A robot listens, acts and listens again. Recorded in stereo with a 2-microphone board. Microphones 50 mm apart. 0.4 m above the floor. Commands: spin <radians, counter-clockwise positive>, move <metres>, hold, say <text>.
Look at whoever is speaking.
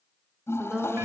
spin -0.52
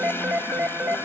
hold
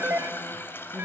hold
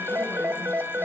say I heard a woman speaking, but can't make it out now. It was about 15° left or 135° right.